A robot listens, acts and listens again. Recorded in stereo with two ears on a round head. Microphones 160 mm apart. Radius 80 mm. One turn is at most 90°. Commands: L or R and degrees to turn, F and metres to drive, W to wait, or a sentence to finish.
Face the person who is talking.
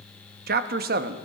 R55
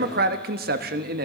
R60
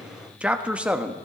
Found it: a man speaking, straight ahead.